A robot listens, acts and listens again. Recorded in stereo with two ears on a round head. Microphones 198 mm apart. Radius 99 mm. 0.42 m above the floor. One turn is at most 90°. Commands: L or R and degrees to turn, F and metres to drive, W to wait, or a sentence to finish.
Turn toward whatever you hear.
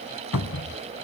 L90
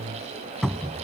Found it: a cupboard door, straight ahead.